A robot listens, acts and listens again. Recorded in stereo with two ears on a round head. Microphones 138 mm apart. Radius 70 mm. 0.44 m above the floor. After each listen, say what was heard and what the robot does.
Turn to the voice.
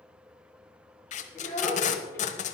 The child speaking: about 15° left or 165° left. Turn 15° left.
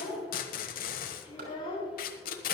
So it is at 150° left. Turn 150° left.
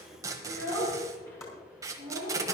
The child speaking is now 15° left. Turn 15° left.
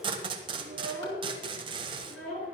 Facing the child speaking.